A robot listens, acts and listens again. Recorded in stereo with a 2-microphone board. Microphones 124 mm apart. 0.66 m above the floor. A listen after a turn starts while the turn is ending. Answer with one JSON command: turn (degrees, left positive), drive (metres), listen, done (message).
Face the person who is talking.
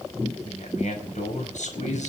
{"turn": 90}
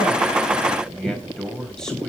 {"done": "Found it: a man speaking, straight ahead, over 4 m away."}